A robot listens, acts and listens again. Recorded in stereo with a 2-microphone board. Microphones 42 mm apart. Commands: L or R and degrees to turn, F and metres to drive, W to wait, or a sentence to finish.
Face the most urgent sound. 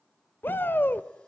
L60
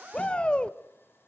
L30
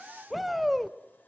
Facing the shout, 1 to 2 m away.